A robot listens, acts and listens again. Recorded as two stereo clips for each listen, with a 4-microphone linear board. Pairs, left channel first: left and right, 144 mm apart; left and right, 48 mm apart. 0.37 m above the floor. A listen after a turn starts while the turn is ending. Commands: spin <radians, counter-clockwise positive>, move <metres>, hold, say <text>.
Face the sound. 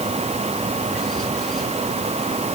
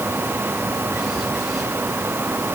hold
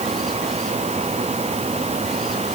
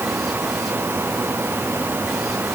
hold
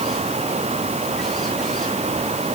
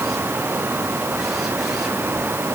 say I can't make out anything to turn to.